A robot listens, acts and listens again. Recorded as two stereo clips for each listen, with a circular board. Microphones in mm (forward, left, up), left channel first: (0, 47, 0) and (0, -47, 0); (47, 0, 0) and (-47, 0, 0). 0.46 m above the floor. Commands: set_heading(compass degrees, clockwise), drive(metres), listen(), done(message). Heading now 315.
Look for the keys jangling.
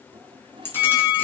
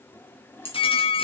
set_heading(295)
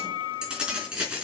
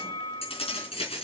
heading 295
set_heading(305)
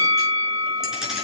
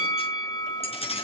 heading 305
done("Found it: keys jangling, straight ahead.")